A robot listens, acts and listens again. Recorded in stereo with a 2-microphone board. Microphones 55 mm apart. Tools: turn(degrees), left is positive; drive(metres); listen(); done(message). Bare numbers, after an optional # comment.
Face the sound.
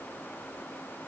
listen()
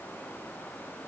listen()
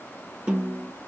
turn(-30)
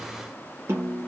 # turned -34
# So it is at 130° right.
turn(-130)
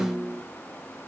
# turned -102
# The snare drum is now 30° right.
turn(-30)
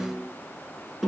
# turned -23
done("Found it: a snare drum, straight ahead.")